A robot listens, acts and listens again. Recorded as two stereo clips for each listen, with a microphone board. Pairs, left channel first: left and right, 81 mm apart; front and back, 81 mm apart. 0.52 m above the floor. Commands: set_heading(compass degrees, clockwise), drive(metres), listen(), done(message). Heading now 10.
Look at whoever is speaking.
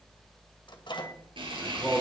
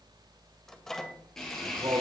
set_heading(200)
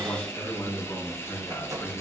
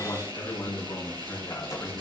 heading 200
set_heading(150)
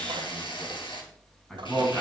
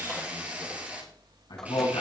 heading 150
set_heading(140)
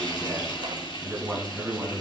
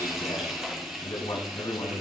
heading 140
done("Found it: a man speaking, straight ahead, over 4 m away.")